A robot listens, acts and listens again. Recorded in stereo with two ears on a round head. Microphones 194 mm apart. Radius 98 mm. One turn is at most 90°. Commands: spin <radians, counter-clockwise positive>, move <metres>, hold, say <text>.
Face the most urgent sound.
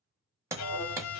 spin -0.35
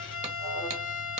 say Found it: an alarm, straight ahead.